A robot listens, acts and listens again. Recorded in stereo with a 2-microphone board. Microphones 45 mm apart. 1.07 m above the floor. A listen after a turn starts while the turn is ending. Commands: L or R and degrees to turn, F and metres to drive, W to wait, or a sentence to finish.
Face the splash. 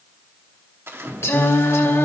R75
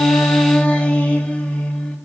W
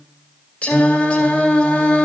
I heard a splash, but can't make it out now. It was about straight ahead or 30° right.